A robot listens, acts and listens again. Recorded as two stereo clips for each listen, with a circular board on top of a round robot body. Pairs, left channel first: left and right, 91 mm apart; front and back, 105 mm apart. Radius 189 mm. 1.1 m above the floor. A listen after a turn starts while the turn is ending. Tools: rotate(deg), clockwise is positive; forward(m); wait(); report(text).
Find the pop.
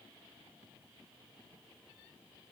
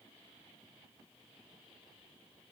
wait()
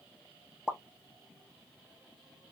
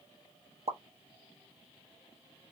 rotate(170)
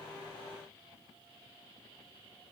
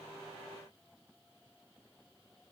report("Facing where the pop came from. I can't hear it now.")